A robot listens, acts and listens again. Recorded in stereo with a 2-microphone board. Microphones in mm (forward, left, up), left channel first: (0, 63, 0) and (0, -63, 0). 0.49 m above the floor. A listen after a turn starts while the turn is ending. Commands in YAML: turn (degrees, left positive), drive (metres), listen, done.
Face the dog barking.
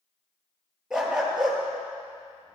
turn: -30
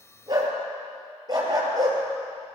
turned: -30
turn: -145
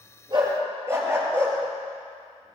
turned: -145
turn: -20
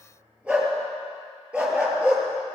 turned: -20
turn: -10
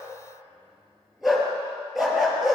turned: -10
done: "Found it: a dog barking, straight ahead, 2 to 4 m away."